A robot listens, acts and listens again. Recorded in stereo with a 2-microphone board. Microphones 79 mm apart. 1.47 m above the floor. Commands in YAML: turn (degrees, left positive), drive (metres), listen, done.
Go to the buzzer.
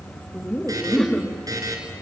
turn: -50
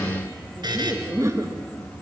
turn: -75
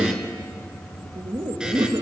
listen: true
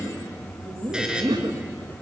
turn: -10
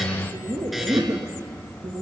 listen: true
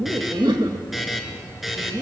drive: 1.0
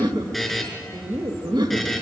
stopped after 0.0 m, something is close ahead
done: "Blocked. The buzzer is further on, straight ahead."